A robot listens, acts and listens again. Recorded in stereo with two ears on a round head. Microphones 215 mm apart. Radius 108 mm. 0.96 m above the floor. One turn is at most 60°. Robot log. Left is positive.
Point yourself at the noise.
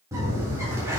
cmd yaw -30
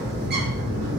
note: So it is at 135° right.
cmd yaw -60
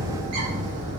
note: The bird is now 100° right.
cmd yaw -60
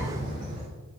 note: The bird is now 35° right.
cmd yaw -35
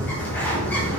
note: The bird is now 10° left.
cmd yaw +10
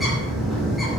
end: Found it: a bird, straight ahead, 2 to 4 m away.